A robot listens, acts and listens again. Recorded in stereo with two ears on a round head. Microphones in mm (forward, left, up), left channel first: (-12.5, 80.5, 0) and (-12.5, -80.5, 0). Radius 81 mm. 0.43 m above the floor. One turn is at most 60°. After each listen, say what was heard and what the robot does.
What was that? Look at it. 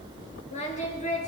The singing: about 40° left or 140° left. Turn 40° left.
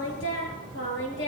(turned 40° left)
So it is at 100° left. Turn 60° left.
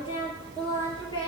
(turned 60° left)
The singing is now 25° left. Turn 25° left.
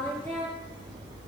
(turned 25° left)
The singing is now 10° left. Turn 10° left.
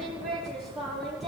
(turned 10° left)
Facing the singing, over 4 m away.